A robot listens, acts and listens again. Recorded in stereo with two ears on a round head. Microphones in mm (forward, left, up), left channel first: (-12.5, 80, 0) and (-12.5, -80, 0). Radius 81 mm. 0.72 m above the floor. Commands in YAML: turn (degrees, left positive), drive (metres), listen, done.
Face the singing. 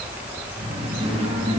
turn: -35
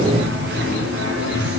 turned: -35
turn: -100
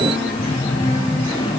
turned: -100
turn: 20
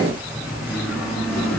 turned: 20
done: "Facing the singing."